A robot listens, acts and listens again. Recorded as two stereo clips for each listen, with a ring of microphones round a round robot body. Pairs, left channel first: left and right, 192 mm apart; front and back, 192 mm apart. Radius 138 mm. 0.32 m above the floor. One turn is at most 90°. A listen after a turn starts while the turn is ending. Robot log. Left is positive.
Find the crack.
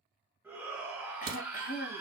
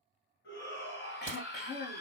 note: The crack: 95° right.
cmd yaw -90
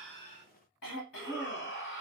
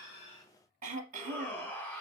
end: Facing where the crack came from. I can't hear it now.